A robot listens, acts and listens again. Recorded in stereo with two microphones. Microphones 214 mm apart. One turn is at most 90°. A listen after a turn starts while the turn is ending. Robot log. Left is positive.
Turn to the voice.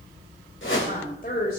note: The woman speaking: about 45° left or 135° left.
cmd yaw +45
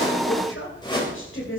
note: So it is at 70° left.
cmd yaw +70
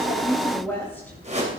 note: The woman speaking is now 10° left.
cmd yaw +10
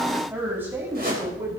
note: The woman speaking is now 15° right.
cmd yaw -15
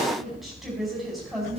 end: Facing the woman speaking.